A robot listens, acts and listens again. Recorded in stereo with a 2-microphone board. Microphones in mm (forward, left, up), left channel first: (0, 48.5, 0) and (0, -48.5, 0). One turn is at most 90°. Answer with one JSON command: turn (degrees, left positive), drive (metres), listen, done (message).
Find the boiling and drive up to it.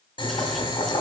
{"turn": 55}
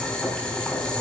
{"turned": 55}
{"turn": 10}
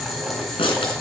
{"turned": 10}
{"drive": 1.0}
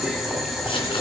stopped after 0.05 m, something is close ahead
{"done": "Blocked. The boiling is further on, straight ahead."}